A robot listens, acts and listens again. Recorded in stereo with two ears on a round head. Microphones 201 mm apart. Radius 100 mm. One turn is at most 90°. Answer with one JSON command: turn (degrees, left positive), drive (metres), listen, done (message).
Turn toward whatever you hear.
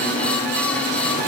{"listen": true}
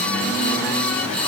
{"listen": true}
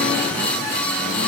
{"done": "I can't make out anything."}